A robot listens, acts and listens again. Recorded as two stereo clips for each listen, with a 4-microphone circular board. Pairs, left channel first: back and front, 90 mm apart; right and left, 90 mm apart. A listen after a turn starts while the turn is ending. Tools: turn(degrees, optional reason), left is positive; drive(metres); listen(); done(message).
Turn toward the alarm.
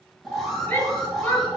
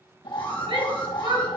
turn(degrees=-90, reason="The alarm: 90° right.")
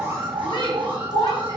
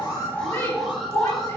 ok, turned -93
done("Facing the alarm, 2 to 4 m away.")